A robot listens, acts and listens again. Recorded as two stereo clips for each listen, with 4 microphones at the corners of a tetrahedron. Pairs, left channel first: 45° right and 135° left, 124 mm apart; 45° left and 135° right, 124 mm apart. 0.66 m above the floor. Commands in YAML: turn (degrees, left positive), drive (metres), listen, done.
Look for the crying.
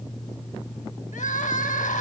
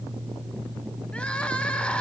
turn: -35
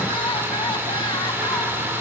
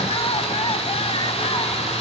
listen: true
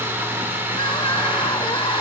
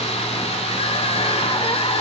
done: "Found it: crying, straight ahead."